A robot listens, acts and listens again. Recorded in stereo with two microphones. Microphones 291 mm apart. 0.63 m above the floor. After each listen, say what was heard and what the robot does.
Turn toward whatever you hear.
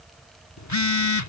The phone buzzing: about 70° left or 110° left. Turn 70° left.
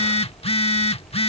So it is at 20° left. Turn 20° left.
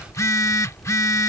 The phone buzzing is now 10° left. Turn 10° left.
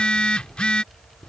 Found it: a phone buzzing, straight ahead.